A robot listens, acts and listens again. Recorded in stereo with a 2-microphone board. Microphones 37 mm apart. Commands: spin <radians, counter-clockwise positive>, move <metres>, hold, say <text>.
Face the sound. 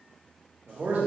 spin -1.05
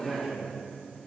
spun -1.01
say Found it: a man speaking, straight ahead.